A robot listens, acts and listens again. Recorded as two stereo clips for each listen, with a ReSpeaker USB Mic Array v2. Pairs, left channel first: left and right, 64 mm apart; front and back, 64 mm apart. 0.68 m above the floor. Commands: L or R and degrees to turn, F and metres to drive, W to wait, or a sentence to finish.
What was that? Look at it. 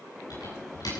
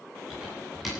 L90
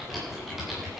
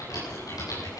Facing the typing on a keyboard.